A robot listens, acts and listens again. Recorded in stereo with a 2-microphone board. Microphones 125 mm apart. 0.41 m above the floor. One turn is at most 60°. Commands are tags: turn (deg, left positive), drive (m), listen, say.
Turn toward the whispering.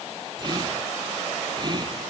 <turn deg="-35"/>
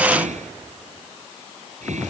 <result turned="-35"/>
<turn deg="-60"/>
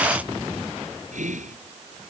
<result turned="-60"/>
<turn deg="-60"/>
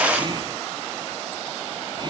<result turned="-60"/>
<turn deg="-40"/>
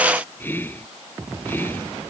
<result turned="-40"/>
<turn deg="15"/>
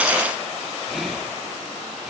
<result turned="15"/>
<listen/>
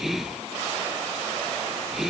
<say>Found it: whispering, straight ahead.</say>